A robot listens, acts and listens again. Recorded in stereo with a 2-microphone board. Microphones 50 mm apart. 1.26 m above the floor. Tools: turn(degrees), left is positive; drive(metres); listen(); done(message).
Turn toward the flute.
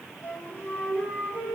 turn(degrees=60)
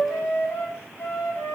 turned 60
turn(degrees=55)
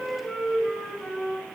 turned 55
done("Found it: a flute, straight ahead.")